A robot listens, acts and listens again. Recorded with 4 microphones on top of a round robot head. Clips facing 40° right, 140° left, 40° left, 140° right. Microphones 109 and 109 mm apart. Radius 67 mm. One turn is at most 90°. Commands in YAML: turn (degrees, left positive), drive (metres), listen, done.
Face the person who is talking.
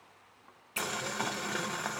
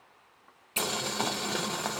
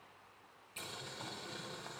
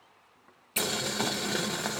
listen: true
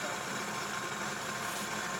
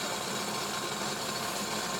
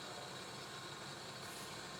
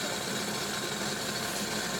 listen: true
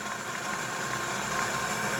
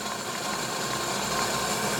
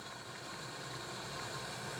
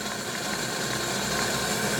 done: "I can't make out anyone speaking, only boiling."